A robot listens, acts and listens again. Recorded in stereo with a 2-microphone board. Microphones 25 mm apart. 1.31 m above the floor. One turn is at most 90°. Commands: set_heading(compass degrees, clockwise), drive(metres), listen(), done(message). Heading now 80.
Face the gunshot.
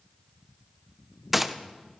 set_heading(110)
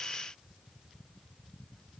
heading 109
listen()
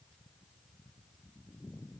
done("I heard a gunshot, but can't make it out now. It was about 20° left or 145° right.")